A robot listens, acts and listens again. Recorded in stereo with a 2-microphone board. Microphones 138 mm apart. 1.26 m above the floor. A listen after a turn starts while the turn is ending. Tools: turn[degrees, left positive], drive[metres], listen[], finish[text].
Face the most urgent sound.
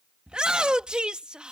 Action: turn[-30]
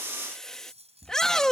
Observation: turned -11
Action: finish[Found it: a shout, straight ahead.]